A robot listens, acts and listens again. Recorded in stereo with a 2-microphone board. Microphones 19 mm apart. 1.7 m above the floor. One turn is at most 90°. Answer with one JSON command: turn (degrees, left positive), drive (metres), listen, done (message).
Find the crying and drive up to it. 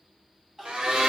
{"turn": -20}
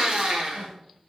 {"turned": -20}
{"listen": true}
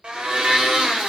{"listen": true}
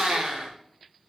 {"done": "I heard crying, but can't make it out now. It was about straight ahead or 140° right. I did not reach it."}